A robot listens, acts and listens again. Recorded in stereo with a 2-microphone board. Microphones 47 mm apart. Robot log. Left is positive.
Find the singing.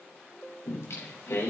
cmd yaw +90
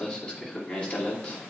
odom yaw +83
note: So it is at 30° left.
cmd yaw +30
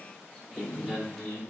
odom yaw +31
note: The singing is now 15° left.
cmd yaw +15
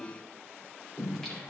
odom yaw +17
end: Facing the singing.